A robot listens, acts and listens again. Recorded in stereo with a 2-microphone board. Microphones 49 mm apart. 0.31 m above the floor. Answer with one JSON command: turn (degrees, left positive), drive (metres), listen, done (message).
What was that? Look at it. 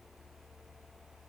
{"listen": true}
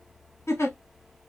{"turn": 70}
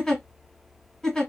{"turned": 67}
{"turn": 10}
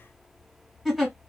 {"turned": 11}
{"done": "Facing the giggle, 1 to 2 m away."}